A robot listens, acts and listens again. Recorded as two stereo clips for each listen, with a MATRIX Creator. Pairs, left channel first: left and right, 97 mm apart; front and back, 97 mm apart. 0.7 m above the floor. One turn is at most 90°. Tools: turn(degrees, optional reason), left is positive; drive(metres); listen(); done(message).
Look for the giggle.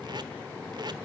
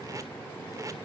listen()
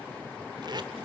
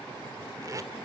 listen()
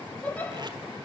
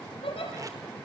turn(degrees=15, reason="The giggle: 15° left.")
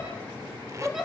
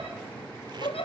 done("Facing the giggle, over 4 m away.")